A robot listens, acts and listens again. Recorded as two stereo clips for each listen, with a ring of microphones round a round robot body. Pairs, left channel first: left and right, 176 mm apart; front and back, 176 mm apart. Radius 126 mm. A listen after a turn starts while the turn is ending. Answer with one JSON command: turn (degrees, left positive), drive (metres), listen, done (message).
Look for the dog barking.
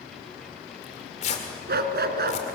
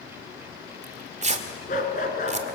{"turn": -60}
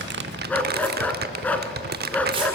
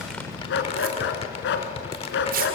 {"turn": 10}
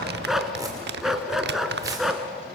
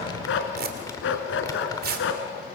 {"done": "Found it: a dog barking, straight ahead, 2 to 4 m away."}